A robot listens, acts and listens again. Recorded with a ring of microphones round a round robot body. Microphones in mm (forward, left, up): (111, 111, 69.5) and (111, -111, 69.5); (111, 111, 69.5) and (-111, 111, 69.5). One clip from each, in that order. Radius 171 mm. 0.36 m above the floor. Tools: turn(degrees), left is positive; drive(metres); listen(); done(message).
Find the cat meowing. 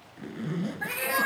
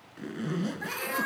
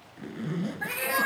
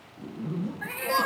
turn(degrees=45)
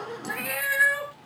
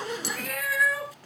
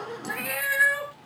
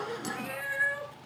turn(degrees=-10)
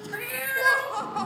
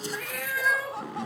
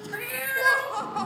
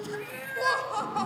done("Facing the cat meowing.")